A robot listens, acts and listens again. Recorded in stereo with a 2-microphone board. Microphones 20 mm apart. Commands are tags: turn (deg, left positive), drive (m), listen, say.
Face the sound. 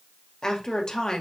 <turn deg="40"/>
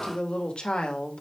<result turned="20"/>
<turn deg="110"/>
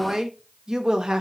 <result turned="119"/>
<turn deg="-40"/>
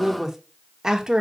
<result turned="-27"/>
<turn deg="-35"/>
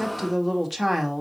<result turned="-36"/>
<say>Found it: a woman speaking, straight ahead, 1 to 2 m away.</say>